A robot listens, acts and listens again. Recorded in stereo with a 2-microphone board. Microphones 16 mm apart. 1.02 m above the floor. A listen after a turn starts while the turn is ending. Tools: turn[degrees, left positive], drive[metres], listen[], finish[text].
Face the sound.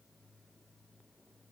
Action: listen[]
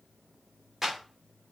Thought: The clap: about 25° right or 155° right.
Action: turn[-25]
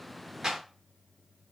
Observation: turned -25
Thought: So it is at 130° right.
Action: turn[-130]
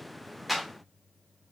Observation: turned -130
Action: finish[Found it: a clap, straight ahead.]